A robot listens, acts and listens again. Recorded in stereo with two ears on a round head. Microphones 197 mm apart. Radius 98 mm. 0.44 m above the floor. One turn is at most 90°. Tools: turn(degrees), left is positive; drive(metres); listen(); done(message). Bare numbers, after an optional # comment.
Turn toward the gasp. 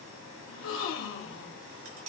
# The gasp: about 60° left or 120° left.
turn(60)
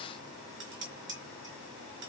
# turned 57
listen()
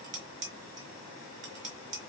done("I heard a gasp, but can't make it out now. It was about 5° left or 65° left.")